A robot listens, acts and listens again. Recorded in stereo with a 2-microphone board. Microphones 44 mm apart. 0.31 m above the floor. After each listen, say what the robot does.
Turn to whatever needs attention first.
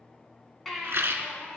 Turn 30° left.
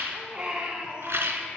Turn 25° right.
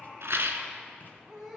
Facing the baby crying.